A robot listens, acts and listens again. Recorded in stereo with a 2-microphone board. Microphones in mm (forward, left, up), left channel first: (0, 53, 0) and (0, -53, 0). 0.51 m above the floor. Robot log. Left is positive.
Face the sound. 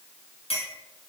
note: The clink: about 65° left or 115° left.
cmd yaw +65
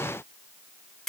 end: Found it: a clink, straight ahead.